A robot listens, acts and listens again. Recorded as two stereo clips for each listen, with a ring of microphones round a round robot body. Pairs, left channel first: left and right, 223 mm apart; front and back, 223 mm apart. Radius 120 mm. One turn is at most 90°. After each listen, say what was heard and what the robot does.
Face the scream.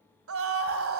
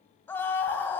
The scream: 80° right. Turn 80° right.
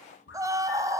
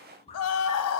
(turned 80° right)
The scream is now 15° right. Turn 15° right.
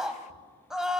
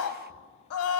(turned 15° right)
Found it: a scream, straight ahead, 2 to 4 m away.